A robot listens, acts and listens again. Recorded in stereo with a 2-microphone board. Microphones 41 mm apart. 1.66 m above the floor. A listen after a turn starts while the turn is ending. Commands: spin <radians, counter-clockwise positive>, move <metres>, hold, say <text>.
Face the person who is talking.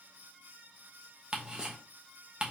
hold
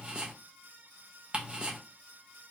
hold
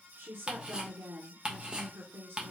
spin -1.05
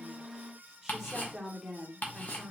say Facing the woman speaking, 1 to 2 m away.